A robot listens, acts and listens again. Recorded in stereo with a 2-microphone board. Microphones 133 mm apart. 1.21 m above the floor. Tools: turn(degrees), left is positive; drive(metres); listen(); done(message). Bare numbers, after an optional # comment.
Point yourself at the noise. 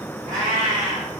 # The cat meowing: about 70° right or 110° right.
turn(-70)
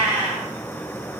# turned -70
# So it is at 10° right.
turn(-10)
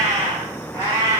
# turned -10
# The cat meowing is now 20° left.
turn(20)
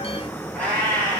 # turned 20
# The cat meowing is now 15° left.
turn(15)
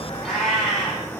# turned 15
done("Found it: a cat meowing, straight ahead, 2 to 4 m away.")